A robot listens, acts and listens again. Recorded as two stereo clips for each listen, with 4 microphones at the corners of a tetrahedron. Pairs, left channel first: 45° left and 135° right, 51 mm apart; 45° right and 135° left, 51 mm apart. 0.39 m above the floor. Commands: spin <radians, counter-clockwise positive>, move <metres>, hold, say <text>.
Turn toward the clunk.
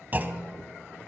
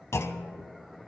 spin -1.40
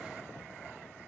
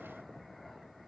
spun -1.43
say I heard a clunk from this way, but can't make it out now.